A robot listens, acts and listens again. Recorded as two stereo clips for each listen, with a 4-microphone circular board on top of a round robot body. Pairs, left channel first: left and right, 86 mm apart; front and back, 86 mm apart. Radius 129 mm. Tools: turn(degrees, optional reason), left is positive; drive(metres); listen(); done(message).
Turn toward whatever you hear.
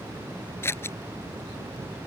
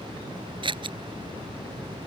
turn(degrees=150, reason="The scissors: 150° left.")
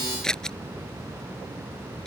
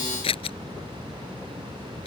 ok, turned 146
done("Facing the scissors.")